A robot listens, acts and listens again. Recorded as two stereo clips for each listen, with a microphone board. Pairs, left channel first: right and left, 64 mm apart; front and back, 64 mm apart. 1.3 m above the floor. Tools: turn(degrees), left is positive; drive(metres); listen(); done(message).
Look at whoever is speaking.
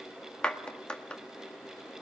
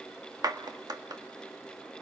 listen()
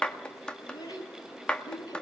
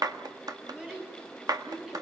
turn(degrees=-105)
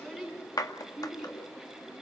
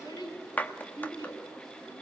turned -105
done("Facing the child speaking.")